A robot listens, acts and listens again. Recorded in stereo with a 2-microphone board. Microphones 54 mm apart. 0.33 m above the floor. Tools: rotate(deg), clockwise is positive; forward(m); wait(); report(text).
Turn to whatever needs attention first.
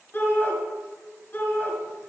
rotate(-30)
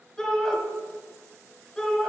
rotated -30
report("Facing the shout, 1 to 2 m away.")